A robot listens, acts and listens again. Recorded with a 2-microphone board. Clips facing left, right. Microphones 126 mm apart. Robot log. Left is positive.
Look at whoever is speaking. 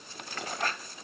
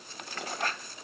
cmd idle
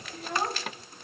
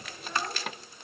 note: The child speaking: about 60° left or 120° left.
cmd yaw +60
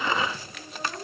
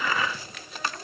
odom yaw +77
note: So it is at 30° left.
cmd yaw +30
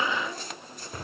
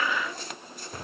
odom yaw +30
cmd idle
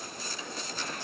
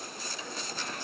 cmd idle
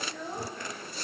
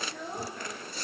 end: Facing the child speaking, over 4 m away.